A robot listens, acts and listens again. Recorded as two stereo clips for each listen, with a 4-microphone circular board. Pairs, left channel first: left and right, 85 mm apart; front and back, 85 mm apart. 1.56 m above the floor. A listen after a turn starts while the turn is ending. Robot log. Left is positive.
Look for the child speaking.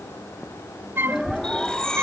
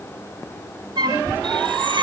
note: The child speaking: 110° left.
cmd yaw +110
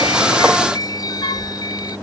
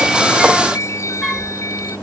note: The child speaking is now 15° right.
cmd yaw -15
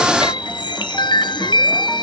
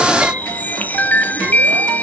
cmd idle
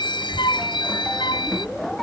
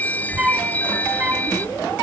end: Facing the child speaking.